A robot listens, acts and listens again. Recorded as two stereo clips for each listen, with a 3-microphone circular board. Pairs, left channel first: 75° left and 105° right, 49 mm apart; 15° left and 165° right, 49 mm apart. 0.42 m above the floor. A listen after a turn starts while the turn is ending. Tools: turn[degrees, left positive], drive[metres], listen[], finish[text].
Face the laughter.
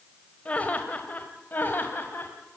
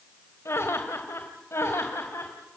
Thought: The laughter: 35° left.
Action: turn[35]
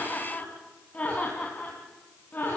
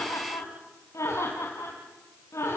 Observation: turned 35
Thought: The laughter is now 20° left.
Action: turn[20]
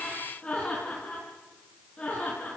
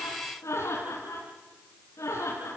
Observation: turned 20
Action: finish[Facing the laughter, over 4 m away.]